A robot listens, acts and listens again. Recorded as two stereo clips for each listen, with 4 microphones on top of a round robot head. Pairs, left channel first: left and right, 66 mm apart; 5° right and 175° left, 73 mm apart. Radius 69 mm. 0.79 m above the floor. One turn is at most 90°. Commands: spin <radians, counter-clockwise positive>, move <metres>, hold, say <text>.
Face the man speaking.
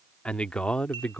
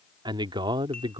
spin 1.57
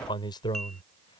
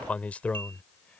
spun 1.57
spin 1.22
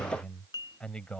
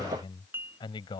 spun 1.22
spin 0.17
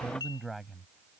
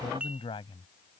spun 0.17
say Found it: a man speaking, straight ahead.